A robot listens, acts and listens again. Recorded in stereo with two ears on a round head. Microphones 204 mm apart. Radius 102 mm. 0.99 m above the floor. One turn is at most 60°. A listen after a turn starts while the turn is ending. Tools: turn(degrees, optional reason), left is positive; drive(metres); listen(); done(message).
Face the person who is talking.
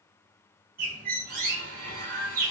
listen()
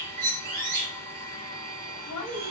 turn(degrees=60, reason="The woman speaking: about 65° left or 115° left.")
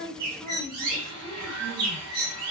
listen()
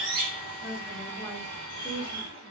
done("Facing the woman speaking.")